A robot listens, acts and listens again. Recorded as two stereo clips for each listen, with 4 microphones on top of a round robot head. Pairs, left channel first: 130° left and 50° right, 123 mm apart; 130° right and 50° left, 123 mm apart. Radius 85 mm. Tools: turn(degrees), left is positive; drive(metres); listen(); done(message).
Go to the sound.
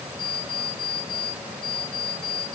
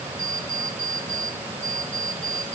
turn(degrees=75)
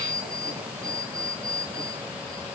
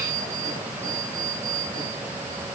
turn(degrees=15)
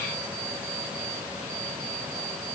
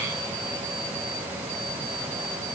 listen()
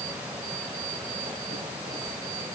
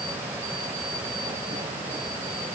listen()
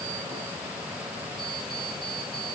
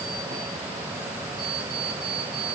drive(metres=1.0)
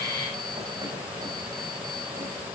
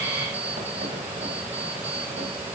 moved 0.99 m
listen()
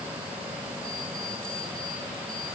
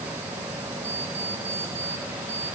listen()
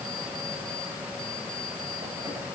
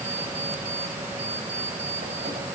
done("I heard an alarm clock from this way, but can't make it out now. I did not reach it.")